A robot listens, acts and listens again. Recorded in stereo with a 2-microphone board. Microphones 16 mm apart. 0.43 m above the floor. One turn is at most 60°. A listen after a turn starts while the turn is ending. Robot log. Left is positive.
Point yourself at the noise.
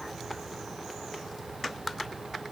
cmd idle
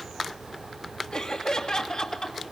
note: The laughter: about 45° left or 135° left.
cmd yaw +45
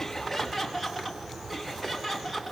end: Found it: laughter, straight ahead, 2 to 4 m away.